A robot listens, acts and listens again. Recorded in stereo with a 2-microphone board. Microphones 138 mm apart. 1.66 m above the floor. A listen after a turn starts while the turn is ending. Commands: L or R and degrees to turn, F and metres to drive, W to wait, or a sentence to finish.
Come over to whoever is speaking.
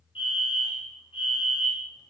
W
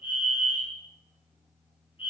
W
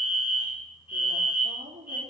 R70
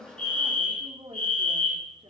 R40
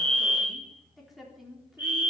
F1.0
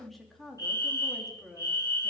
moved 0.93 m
F1.0
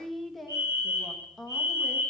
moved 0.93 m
F1.0
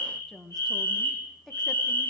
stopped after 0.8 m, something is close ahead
I am next to the woman speaking.